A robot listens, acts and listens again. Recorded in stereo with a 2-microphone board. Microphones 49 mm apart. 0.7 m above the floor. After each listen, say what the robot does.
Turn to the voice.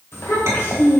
Turn 65° left.
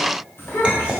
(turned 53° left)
Turn 60° left.
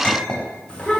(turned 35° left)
Turn 25° left.
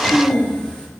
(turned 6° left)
Turn 20° left.
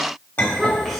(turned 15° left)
Found it: a child speaking, straight ahead, 1 to 2 m away.